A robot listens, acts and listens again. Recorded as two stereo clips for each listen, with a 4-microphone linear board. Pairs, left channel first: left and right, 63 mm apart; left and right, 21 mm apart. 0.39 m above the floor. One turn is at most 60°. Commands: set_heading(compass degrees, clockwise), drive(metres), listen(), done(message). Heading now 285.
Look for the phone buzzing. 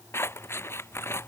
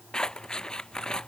listen()
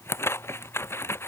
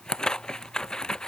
listen()
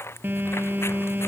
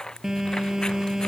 set_heading(315)
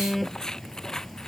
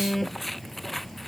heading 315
done("Found it: a phone buzzing, straight ahead.")